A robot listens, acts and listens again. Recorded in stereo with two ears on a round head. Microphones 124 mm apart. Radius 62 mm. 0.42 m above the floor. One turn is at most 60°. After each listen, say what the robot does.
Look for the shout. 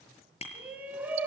Turn 30° right.
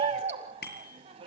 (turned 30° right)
Turn 60° right.
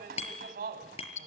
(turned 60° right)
Turn 60° right.
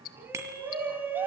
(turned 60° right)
Turn 15° right.
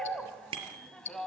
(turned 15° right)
Found it: a shout, straight ahead, 2 to 4 m away.